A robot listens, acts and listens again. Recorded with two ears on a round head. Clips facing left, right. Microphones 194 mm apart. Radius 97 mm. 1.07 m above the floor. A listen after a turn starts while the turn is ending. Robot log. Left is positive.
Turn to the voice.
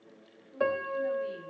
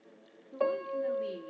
note: The woman speaking: about 70° right or 110° right.
cmd yaw -70
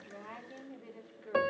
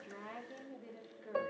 end: Found it: a woman speaking, straight ahead.